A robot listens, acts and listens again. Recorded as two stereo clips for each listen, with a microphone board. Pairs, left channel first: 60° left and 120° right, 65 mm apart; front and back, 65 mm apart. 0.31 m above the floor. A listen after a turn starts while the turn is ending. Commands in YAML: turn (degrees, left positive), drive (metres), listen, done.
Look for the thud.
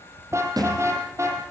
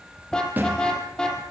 turn: -115
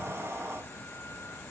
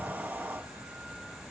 done: "I heard a thud from this way, but can't make it out now."